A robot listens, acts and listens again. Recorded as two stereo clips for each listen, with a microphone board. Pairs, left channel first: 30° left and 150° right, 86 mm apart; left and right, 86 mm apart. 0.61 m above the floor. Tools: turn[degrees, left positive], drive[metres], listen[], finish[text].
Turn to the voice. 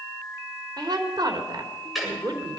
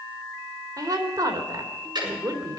Thought: The woman speaking: 125° right.
Action: turn[-125]
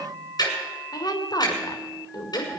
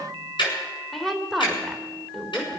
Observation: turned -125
Action: finish[Facing the woman speaking.]